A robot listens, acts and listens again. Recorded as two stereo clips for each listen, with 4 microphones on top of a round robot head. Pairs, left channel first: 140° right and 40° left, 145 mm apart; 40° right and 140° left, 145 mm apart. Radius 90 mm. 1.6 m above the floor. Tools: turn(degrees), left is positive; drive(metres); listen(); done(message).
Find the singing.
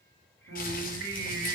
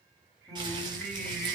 turn(degrees=45)
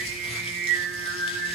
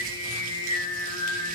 turn(degrees=25)
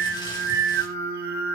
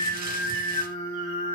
turn(degrees=25)
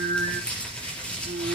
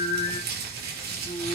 turn(degrees=15)
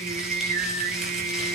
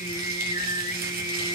done("Found it: singing, straight ahead.")